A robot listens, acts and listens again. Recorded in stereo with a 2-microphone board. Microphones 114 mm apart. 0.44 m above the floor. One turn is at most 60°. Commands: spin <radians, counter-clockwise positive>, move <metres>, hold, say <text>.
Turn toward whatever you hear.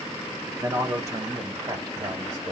spin -0.70
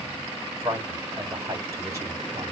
spin -0.44
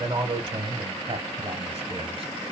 spin -0.87
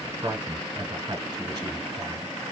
spin -0.52
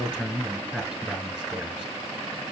say Facing the man speaking, 1 to 2 m away.